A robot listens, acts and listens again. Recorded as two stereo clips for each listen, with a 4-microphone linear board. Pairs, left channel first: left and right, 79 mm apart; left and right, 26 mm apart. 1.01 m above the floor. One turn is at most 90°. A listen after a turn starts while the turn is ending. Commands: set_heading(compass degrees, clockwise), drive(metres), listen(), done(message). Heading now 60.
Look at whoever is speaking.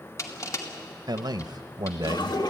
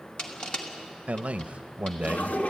set_heading(120)
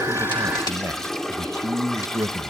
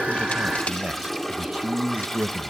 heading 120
set_heading(175)
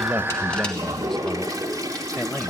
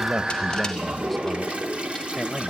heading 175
listen()
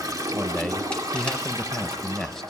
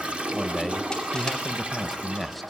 done("Found it: a man speaking, straight ahead.")